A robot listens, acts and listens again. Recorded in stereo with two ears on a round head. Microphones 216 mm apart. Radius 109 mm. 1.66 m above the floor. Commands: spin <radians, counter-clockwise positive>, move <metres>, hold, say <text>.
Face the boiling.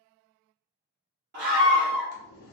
spin 0.79
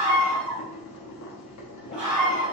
spin 1.57
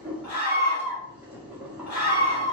say Found it: boiling, straight ahead, under 1 m away.